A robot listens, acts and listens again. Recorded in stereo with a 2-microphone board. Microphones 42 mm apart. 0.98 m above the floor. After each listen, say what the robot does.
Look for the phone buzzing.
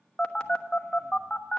Turn 20° left.
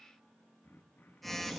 Found it: a phone buzzing, straight ahead, 1 to 2 m away.